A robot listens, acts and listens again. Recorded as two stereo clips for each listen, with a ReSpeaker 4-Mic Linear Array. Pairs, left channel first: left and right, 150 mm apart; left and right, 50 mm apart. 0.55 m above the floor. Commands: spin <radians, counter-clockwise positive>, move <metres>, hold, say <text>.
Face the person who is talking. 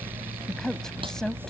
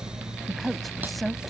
spin 0.52
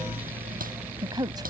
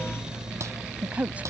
spin -0.44
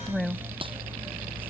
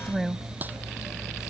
say Facing the woman speaking.